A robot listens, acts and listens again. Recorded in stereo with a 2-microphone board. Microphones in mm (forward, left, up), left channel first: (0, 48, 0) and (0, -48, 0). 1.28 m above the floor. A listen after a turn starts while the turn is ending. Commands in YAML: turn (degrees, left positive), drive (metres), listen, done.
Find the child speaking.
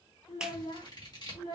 turn: 65
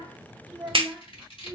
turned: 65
done: "Found it: a child speaking, straight ahead, 1 to 2 m away."